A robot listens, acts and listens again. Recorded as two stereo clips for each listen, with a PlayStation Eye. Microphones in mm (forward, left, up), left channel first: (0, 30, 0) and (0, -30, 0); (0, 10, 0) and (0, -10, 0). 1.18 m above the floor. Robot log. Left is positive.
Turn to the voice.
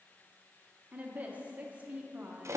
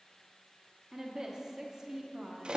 note: The woman speaking: about 25° right or 155° right.
cmd yaw -25
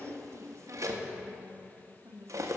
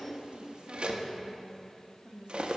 note: So it is at 125° right.
cmd yaw -125
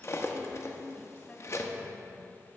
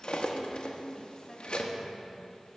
note: The woman speaking is now 25° left.
cmd yaw +25
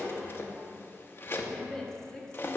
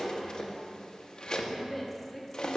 note: The woman speaking is now 10° left.
cmd yaw +10
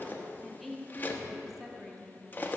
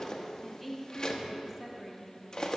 end: Found it: a woman speaking, straight ahead.